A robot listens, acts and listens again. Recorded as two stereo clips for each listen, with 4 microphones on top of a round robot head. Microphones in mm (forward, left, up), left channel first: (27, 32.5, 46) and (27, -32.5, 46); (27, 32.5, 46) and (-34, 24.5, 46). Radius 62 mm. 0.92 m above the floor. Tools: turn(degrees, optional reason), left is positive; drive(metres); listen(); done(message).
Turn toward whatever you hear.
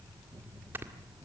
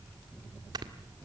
turn(degrees=-155, reason="The snoring: 155° right.")
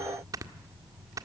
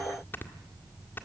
turn(degrees=-60, reason="The snoring is now 60° right.")
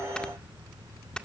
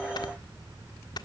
turn(degrees=10, reason="The snoring is now 10° left.")
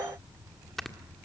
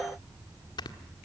done("Facing the snoring, 1 to 2 m away.")